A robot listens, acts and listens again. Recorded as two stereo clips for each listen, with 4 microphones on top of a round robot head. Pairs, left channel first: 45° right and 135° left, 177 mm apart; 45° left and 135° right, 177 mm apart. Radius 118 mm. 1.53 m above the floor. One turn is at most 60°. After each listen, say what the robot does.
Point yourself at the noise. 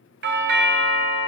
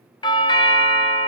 Turn 60° left.
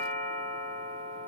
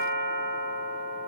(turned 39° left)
Turn 60° left.
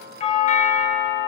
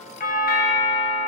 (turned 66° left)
Facing the doorbell, 1 to 2 m away.